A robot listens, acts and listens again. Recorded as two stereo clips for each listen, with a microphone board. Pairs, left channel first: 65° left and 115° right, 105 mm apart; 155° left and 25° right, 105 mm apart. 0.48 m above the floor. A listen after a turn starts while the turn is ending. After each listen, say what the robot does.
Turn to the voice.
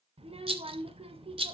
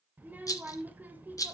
Turn 95° right.
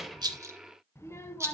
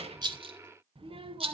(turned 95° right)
Found it: a child speaking, straight ahead.